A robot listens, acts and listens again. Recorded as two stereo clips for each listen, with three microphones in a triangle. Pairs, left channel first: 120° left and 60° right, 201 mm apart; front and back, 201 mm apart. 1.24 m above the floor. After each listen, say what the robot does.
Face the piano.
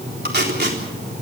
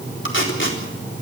Keep listening.
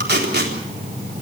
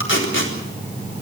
Keep listening.
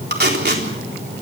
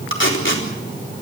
I can't make out a piano, only tape being pulled.